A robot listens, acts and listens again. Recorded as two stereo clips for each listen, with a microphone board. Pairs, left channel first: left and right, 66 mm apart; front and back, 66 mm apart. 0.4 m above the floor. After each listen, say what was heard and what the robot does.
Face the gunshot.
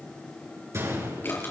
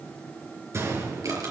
The gunshot: 135° right. Turn 135° right.
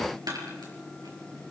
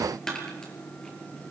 Facing where the gunshot came from. I can't hear it now.